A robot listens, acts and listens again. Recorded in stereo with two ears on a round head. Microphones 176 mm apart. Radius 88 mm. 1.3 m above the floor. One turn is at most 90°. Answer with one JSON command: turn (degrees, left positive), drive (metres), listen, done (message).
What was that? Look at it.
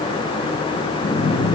{"turn": 55}
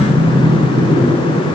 {"turn": 10}
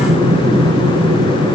{"done": "Found it: breathing, straight ahead, 1 to 2 m away."}